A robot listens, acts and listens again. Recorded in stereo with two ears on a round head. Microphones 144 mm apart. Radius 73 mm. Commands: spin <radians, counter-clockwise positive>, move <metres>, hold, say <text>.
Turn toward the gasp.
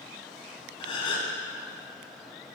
spin 0.61
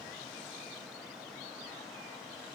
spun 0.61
hold
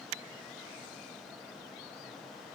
say I heard a gasp, but can't make it out now. It was about straight ahead or 110° left.